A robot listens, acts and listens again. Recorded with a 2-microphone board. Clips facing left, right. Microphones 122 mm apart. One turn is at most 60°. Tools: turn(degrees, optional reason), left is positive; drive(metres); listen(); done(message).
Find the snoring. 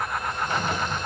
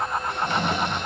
turn(degrees=-60, reason="The snoring: about 70° right or 110° right.")
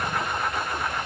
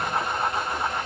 listen()
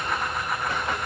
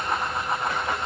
listen()
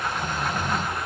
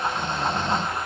turn(degrees=-30, reason="So it is at 30° right.")
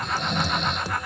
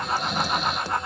done("Found it: snoring, straight ahead.")